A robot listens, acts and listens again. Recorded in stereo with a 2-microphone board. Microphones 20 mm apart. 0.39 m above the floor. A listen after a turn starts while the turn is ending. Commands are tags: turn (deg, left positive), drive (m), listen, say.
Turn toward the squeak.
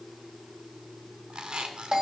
<turn deg="-75"/>
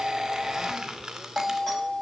<turn deg="-30"/>
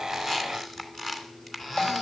<turn deg="10"/>
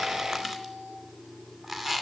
<say>Facing the squeak, 2 to 4 m away.</say>